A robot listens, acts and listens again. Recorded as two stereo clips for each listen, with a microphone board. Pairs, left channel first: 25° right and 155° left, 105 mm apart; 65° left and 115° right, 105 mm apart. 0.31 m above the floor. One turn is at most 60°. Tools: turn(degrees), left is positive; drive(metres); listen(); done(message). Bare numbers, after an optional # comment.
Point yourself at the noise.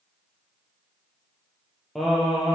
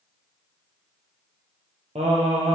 # The singing: 115° right.
turn(-60)
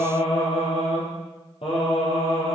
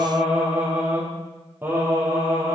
# The singing is now 45° right.
turn(-45)
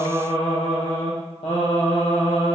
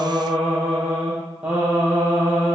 # The singing is now 35° right.
turn(-35)
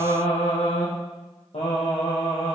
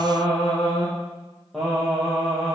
# The singing is now 25° right.
turn(-25)
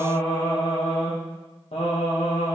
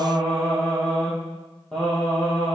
# The singing is now 15° right.
turn(-15)
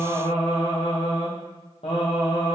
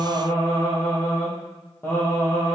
done("Found it: singing, straight ahead.")